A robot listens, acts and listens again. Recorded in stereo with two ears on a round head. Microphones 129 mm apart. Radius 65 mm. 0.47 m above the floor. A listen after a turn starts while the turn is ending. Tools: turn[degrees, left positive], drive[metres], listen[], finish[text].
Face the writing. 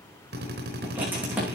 Action: turn[-30]
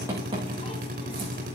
Action: listen[]
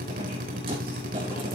Thought: So it is at 140° right.
Action: turn[-140]
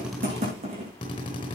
Thought: The writing is now 40° right.
Action: turn[-40]
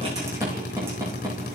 Thought: The writing is now 15° right.
Action: turn[-15]
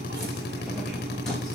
Action: listen[]
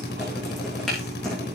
Action: finish[Facing the writing, over 4 m away.]